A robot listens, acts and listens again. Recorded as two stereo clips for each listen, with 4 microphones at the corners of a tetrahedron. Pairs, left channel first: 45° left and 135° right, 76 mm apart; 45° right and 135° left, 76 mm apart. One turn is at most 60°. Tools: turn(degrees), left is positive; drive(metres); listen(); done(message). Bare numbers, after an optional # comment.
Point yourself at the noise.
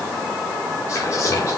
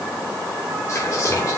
done("Found it: whispering, straight ahead, 2 to 4 m away.")